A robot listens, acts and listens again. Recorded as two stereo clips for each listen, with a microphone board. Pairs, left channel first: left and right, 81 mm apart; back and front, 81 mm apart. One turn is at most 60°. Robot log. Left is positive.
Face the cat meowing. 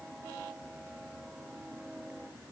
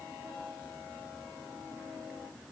cmd idle
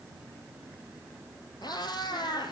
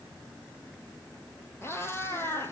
note: The cat meowing: 115° left.
cmd yaw +60
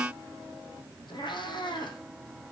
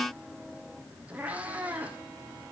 note: The cat meowing is now 70° left.
cmd yaw +60
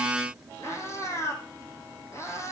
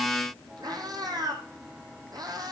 note: The cat meowing is now 35° left.
cmd yaw +35
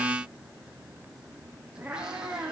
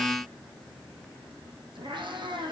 note: The cat meowing is now 10° right.
cmd yaw -10
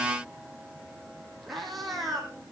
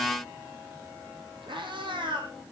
end: Facing the cat meowing, 2 to 4 m away.